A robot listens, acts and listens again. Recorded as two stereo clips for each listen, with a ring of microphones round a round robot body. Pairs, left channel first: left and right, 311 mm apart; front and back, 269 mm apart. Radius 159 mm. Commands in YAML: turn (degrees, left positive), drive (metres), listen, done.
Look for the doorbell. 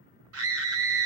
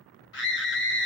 listen: true
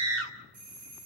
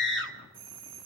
turn: -110
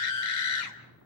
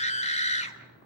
listen: true
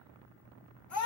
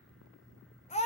listen: true
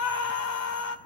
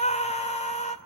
done: "Facing where the doorbell came from. I can't hear it now."